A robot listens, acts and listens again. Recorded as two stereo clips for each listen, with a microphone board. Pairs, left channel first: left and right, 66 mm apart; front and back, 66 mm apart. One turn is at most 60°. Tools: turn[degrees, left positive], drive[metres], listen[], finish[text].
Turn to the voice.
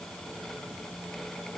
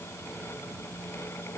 Action: listen[]
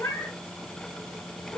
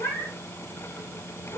Action: listen[]
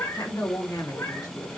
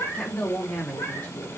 Thought: The woman speaking: 65° left.
Action: turn[60]
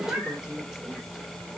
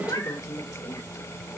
Thought: The woman speaking is now 10° right.
Action: turn[-10]
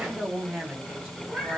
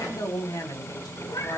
Thought: The woman speaking is now 15° right.
Action: turn[-15]
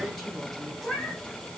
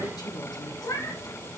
Action: listen[]
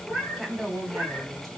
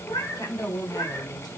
Action: finish[Facing the woman speaking, 2 to 4 m away.]